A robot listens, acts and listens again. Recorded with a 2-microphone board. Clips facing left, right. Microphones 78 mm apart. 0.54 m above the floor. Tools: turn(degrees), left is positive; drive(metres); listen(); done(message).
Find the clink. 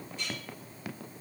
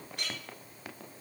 turn(degrees=-75)
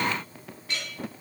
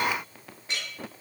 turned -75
turn(degrees=-30)
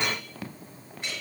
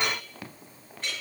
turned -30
done("Found it: a clink, straight ahead, over 4 m away.")